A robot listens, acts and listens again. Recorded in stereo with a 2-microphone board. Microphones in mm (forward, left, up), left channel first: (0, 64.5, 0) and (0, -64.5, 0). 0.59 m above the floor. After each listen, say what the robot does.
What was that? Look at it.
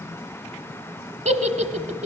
Turn 70° right.
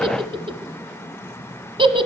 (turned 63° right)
Turn 45° right.
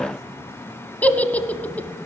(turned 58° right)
Turn 10° left.
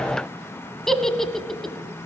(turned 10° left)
Found it: a giggle, straight ahead, 1 to 2 m away.